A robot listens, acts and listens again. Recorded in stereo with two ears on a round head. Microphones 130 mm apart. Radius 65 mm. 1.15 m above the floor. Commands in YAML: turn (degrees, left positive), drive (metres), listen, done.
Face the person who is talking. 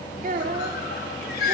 turn: -60
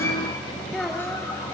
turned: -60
listen: true
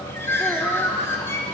listen: true
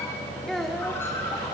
done: "Found it: a child speaking, straight ahead, 2 to 4 m away."